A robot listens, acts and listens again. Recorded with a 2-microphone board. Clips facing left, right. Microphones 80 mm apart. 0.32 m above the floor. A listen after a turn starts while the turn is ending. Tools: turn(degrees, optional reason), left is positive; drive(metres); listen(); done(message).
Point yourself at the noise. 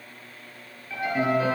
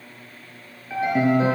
turn(degrees=-25, reason="The piano: about 25° right or 155° right.")
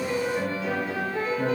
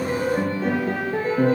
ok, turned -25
turn(degrees=-135, reason="So it is at 135° right.")
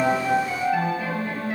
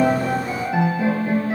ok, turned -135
turn(degrees=-20, reason="The piano is now 20° right.")
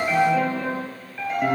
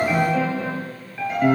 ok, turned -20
done("Facing the piano.")